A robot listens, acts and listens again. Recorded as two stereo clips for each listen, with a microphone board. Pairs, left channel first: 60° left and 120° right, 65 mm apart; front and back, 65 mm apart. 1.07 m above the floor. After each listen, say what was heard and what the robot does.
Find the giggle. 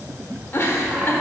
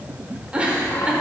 The giggle: 110° left. Turn 110° left.
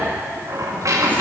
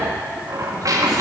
Keep listening.
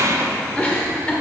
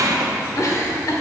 Found it: a giggle, straight ahead.